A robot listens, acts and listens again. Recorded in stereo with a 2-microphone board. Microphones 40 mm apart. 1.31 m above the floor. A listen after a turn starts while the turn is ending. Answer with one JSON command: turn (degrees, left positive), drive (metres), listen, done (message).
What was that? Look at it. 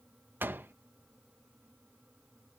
{"turn": -60}
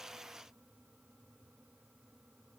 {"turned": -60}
{"listen": true}
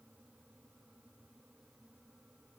{"done": "I heard a door slam, but can't make it out now. It was about straight ahead or 60° right."}